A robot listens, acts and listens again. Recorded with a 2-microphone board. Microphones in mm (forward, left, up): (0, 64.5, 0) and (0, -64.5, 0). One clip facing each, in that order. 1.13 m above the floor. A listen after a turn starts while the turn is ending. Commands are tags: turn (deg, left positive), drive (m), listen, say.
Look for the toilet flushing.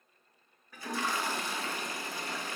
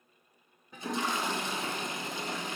<turn deg="-20"/>
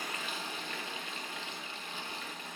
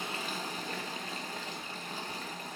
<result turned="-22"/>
<turn deg="-130"/>
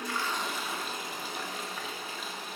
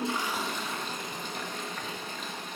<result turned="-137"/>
<say>Facing the toilet flushing, under 1 m away.</say>